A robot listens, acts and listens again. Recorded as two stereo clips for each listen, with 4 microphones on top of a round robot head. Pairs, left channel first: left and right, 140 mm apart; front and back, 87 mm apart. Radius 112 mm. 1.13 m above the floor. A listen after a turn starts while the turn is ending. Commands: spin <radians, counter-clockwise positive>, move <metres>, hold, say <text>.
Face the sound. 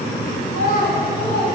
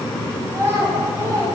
spin 2.18
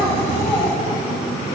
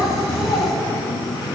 spin 0.35
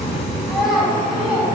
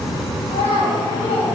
say Facing the child speaking, over 4 m away.